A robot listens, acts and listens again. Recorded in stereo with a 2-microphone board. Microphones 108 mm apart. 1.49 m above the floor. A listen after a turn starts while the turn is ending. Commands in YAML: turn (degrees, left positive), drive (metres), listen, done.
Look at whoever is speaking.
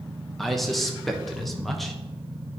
turn: 30
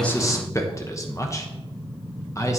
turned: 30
turn: 150
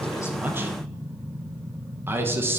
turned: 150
turn: -20
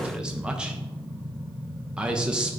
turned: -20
turn: -10
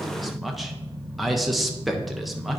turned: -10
done: "Facing the man speaking, 1 to 2 m away."